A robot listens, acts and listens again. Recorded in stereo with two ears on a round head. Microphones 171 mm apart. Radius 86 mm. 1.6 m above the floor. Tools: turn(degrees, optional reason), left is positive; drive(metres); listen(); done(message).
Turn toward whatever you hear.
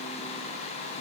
listen()
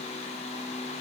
listen()
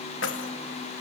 turn(degrees=75, reason="The keys jangling: about 75° left or 105° left.")
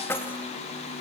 turn(degrees=15, reason="So it is at 15° left.")
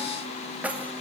turn(degrees=-10, reason="The keys jangling is now 10° right.")
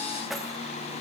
done("Facing the keys jangling.")